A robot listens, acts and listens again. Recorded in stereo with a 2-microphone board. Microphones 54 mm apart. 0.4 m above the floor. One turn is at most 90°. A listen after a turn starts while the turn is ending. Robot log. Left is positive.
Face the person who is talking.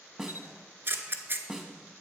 cmd idle
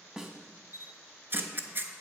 cmd idle
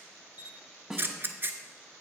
end: I can't make out anyone speaking, only a snare drum and a camera shutter.